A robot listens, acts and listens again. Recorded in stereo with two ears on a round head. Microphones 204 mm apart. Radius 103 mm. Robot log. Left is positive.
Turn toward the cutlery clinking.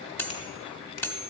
cmd yaw +30
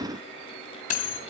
note: So it is at 140° left.
cmd yaw +140
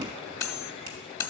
note: The cutlery clinking is now 15° left.
cmd yaw +15
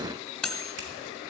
end: Facing the cutlery clinking, under 1 m away.